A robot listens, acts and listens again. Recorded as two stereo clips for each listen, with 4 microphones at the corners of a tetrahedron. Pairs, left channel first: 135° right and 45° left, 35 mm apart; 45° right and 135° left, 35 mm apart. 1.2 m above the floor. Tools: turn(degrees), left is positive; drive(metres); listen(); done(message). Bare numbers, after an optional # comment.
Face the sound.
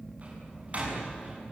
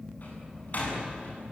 done("Facing the door slam, over 4 m away.")